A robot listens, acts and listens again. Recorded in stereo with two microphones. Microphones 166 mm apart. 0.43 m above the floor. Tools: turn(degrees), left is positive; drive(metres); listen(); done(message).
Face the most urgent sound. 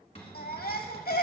turn(degrees=65)
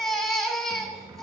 done("Facing the baby crying.")